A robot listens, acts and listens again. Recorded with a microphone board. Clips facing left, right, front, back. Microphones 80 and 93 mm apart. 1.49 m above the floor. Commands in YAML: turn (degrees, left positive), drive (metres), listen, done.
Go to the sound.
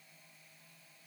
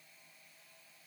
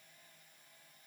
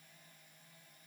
listen: true
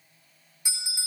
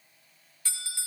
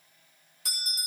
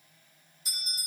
turn: 15
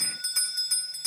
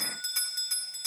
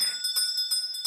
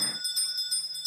drive: 1.0
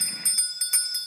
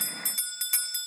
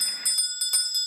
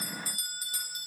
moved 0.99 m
drive: 1.0
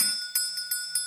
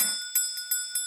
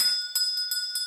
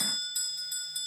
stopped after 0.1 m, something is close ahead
done: "Arrived at the bell, straight ahead."